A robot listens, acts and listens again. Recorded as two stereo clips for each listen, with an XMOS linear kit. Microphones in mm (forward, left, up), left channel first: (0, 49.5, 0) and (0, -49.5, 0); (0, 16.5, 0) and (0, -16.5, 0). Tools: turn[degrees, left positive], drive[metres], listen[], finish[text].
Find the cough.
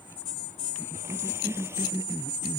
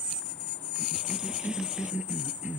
Thought: The cough: about 30° right or 150° right.
Action: turn[-30]
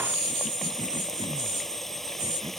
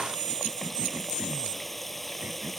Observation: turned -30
Action: listen[]
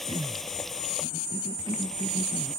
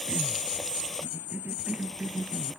Thought: So it is at 120° right.
Action: turn[-120]
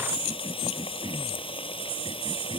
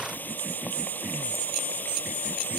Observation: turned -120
Action: listen[]
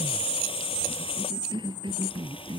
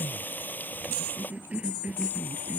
Thought: The cough is now 55° right.
Action: turn[-55]
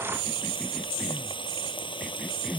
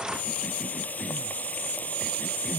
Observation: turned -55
Action: listen[]
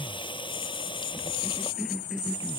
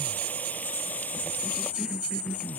Action: listen[]
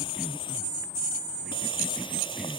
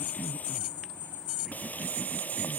Action: finish[I heard a cough from this way, but can't make it out now.]